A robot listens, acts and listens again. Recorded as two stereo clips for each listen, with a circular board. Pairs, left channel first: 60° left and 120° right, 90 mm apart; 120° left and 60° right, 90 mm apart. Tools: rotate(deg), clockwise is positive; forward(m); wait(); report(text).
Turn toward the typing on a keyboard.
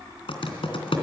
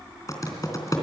rotate(-70)
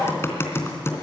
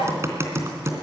report("Facing the typing on a keyboard, 2 to 4 m away.")